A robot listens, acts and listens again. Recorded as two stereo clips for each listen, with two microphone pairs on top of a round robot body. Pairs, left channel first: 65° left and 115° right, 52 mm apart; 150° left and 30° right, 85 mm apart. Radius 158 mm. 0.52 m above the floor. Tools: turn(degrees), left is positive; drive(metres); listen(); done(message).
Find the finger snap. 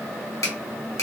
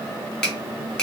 turn(degrees=70)
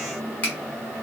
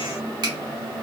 done("Facing the finger snap, 1 to 2 m away.")